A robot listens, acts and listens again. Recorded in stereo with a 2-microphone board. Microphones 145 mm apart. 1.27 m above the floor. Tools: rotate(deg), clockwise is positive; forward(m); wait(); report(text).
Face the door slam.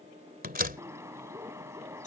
rotate(90)
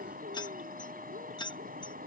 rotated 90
report("I heard a door slam from this way, but can't make it out now.")